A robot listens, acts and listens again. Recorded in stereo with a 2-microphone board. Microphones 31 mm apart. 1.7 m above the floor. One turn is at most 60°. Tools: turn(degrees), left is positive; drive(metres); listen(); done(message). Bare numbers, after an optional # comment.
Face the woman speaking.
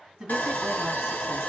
turn(-30)
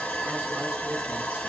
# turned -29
listen()
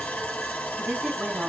# So it is at 140° right.
turn(-60)
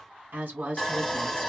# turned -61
# The woman speaking is now 80° right.
turn(-60)
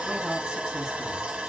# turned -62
# Nothing new. It was at 15° right.
turn(-15)
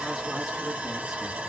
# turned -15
listen()
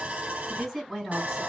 done("Found it: a woman speaking, straight ahead, 2 to 4 m away.")